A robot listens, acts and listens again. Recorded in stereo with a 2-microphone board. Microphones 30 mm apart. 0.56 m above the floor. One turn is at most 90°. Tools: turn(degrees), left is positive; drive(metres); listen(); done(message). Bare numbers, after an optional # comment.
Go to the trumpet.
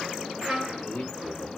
# The trumpet: about 50° right or 130° right.
turn(-50)
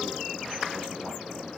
listen()
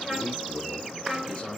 drive(1.0)
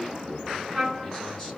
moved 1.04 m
drive(1.0)
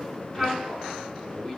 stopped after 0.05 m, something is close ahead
done("I am next to the trumpet.")